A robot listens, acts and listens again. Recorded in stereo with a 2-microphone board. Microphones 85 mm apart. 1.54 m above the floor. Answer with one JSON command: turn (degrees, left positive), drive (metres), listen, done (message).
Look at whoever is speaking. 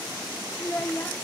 {"turn": 20}
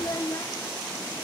{"turn": 135}
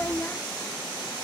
{"turn": 30}
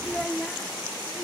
{"turn": 10}
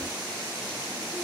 {"listen": true}
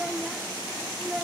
{"done": "Facing the child speaking."}